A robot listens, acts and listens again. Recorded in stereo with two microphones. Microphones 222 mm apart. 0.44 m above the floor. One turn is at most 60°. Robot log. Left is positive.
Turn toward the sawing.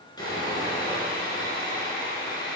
note: The sawing: about 15° left or 165° left.
cmd yaw +15
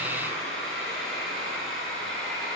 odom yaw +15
end: Facing the sawing, 2 to 4 m away.